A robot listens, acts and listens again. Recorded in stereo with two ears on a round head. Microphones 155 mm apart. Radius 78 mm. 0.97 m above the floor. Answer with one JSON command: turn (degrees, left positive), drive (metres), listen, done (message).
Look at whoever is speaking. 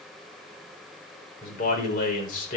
{"turn": 55}
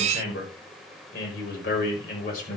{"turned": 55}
{"turn": 60}
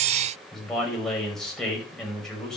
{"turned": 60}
{"done": "Found it: a man speaking, straight ahead, over 4 m away."}